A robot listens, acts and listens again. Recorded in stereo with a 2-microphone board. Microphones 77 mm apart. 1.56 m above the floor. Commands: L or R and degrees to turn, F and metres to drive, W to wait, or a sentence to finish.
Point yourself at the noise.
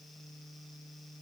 W
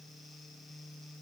W
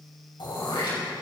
L90
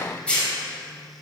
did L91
L15
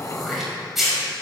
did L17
Found it: throat clearing, straight ahead, over 4 m away.